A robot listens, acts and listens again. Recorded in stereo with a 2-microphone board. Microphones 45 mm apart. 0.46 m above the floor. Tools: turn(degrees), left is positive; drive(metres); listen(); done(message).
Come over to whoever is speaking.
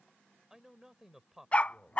turn(degrees=-30)
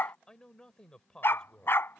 turn(degrees=20)
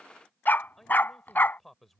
drive(metres=1.0)
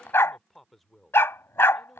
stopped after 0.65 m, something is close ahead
done("Arrived at the man speaking, straight ahead.")